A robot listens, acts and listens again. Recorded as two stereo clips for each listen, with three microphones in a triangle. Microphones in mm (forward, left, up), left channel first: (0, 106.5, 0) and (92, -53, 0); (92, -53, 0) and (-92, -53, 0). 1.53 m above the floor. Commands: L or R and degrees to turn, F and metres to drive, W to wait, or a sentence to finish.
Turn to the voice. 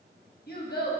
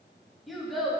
L90
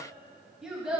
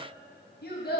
L25
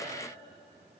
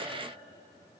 W
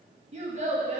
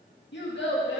R10
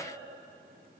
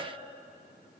W
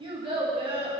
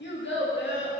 Facing the child speaking.